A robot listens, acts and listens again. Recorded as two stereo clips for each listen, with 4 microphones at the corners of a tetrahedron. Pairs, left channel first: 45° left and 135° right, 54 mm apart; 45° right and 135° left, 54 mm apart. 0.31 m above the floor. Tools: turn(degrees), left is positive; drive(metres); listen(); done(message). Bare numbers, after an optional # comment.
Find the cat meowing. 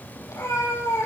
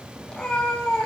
# The cat meowing: 30° left.
turn(30)
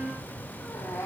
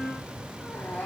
# The cat meowing is now 15° left.
turn(15)
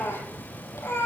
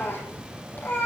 done("Found it: a cat meowing, straight ahead, over 4 m away.")